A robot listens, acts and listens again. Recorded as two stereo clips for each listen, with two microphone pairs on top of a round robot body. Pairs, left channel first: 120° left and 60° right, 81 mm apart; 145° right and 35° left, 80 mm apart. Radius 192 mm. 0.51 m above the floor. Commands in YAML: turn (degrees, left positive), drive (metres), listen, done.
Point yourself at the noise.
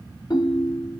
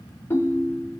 turn: 165
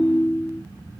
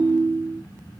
turn: 55
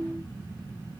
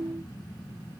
turn: 20
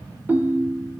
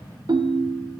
done: "Facing the ringtone, under 1 m away."